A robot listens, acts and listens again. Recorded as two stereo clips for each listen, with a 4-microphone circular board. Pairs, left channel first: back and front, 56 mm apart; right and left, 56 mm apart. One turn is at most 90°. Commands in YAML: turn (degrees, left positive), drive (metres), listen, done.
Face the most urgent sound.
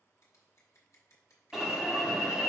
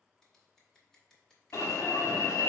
turn: -80
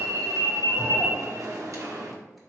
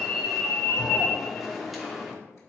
done: "Facing the alarm, 1 to 2 m away."